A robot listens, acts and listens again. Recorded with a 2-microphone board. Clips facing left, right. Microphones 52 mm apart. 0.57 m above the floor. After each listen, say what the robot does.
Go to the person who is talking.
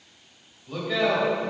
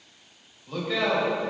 Turn 30° left.
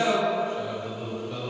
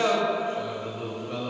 Turn 30° right.
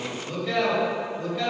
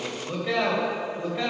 Turn 15° right.
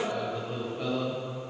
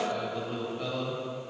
Drive 1.0 m forward.
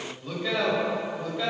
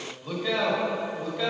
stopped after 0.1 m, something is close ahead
Something is in my way. I am facing the man speaking but have not reached it.